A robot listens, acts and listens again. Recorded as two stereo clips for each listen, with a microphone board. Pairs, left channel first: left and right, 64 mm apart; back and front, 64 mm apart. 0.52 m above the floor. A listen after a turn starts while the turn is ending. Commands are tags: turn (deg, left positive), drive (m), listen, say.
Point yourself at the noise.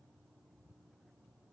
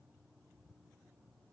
<listen/>
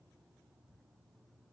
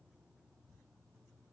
<listen/>
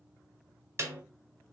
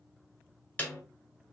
<turn deg="-115"/>
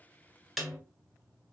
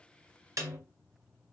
<say>Found it: a snare drum, straight ahead, 1 to 2 m away.</say>